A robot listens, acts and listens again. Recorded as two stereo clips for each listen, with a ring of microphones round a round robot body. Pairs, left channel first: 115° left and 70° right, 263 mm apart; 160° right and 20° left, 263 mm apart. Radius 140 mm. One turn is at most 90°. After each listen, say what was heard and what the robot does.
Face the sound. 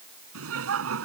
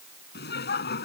The laughter: 105° right. Turn 90° right.
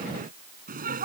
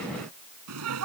The laughter is now 10° right. Turn 10° right.
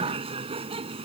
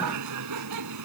Facing the laughter.